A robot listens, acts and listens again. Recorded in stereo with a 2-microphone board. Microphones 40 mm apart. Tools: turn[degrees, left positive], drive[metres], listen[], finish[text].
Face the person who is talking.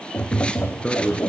Thought: The man speaking: about 25° left or 155° left.
Action: turn[25]
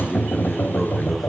Action: finish[Facing the man speaking.]